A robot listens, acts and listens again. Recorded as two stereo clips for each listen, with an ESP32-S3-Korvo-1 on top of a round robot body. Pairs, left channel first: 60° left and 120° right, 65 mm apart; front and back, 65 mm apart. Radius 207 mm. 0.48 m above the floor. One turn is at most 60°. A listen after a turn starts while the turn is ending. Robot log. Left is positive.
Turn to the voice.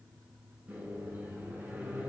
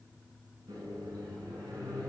cmd idle
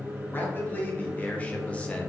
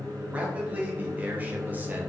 note: The man speaking: 120° left.
cmd yaw +60
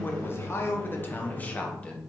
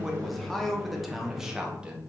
note: The man speaking is now 120° left.
cmd yaw +60
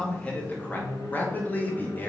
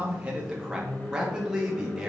note: The man speaking is now 105° left.
cmd yaw +60
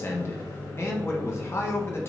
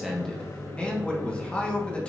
note: The man speaking is now 60° left.
cmd yaw +60
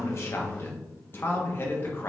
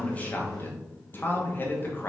note: The man speaking is now 35° left.
cmd yaw +35
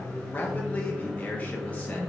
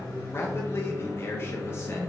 end: Found it: a man speaking, straight ahead, 1 to 2 m away.